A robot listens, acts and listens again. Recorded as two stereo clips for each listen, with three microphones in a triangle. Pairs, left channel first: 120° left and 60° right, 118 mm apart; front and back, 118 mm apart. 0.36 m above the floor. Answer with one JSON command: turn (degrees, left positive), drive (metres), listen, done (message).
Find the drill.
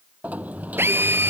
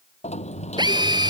{"turn": -130}
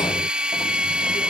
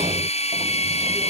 {"turn": 20}
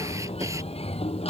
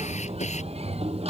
{"listen": true}
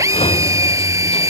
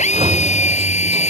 {"done": "Facing the drill."}